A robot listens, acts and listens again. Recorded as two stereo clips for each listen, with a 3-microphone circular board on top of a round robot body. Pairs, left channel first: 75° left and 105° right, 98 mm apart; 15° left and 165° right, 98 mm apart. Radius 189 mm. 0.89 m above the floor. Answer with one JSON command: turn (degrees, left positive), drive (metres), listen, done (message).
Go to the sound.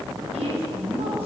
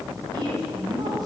{"turn": -115}
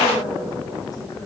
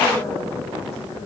{"turn": 25}
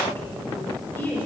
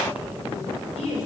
{"drive": 1.0}
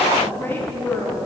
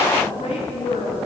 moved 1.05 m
{"drive": 1.0}
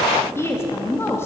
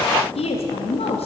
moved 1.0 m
{"turn": 10}
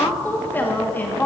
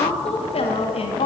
{"drive": 1.0}
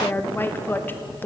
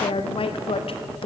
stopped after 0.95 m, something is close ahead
{"done": "Arrived at the woman speaking, straight ahead."}